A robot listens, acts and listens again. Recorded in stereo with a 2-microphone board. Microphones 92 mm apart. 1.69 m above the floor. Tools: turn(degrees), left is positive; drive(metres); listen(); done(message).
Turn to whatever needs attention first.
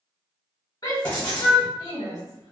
turn(degrees=40)
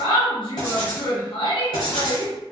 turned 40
turn(degrees=90)
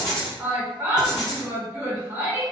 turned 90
turn(degrees=-30)
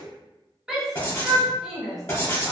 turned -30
done("Found it: a shout, straight ahead, 1 to 2 m away.")